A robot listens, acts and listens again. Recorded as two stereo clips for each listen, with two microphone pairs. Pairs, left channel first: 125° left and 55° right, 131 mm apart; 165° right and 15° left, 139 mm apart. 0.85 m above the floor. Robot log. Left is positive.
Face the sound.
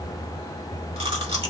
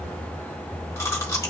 note: The chewing: 95° right.
cmd yaw -95
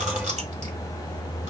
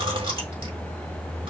cmd idle
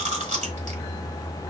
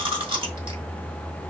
note: The chewing is now 35° right.
cmd yaw -35
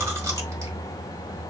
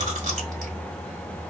cmd idle
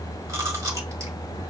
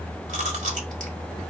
note: The chewing is now 10° left.
cmd yaw +10
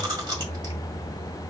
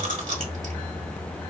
end: Facing the chewing, 1 to 2 m away.